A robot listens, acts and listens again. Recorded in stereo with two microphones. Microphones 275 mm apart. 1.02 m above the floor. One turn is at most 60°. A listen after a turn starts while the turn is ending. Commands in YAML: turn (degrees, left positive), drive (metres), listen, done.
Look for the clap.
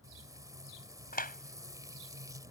turn: 30
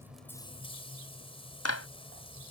turn: 60
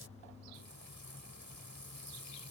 turn: 55
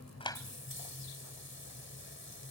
listen: true
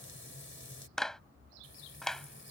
done: "Found it: a clap, straight ahead."